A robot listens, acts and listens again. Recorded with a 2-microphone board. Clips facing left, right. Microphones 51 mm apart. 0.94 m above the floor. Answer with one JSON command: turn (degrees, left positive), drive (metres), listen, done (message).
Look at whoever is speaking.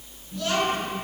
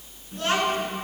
{"turn": -40}
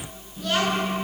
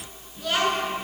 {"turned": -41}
{"done": "Found it: a child speaking, straight ahead."}